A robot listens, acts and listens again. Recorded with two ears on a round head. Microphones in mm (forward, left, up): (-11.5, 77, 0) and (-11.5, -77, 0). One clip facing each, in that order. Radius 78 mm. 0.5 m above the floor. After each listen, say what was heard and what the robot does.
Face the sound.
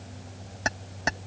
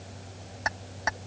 The keys jangling: about 35° left or 145° left. Turn 35° left.
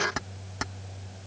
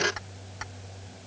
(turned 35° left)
So it is at 120° left. Turn 120° left.
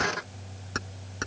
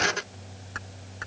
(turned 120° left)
The keys jangling is now 50° left. Turn 50° left.
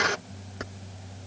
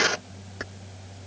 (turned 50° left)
Found it: keys jangling, straight ahead.